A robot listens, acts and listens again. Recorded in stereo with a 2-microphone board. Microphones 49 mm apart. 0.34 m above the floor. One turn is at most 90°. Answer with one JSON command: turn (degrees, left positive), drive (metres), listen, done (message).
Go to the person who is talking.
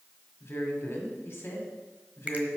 {"turn": 50}
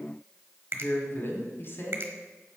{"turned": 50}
{"turn": 65}
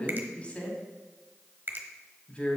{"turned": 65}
{"turn": 35}
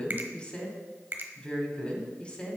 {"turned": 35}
{"turn": 30}
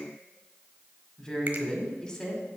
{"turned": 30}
{"turn": 20}
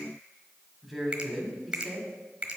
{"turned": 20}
{"drive": 1.0}
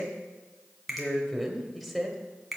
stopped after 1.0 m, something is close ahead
{"done": "I am next to the woman speaking."}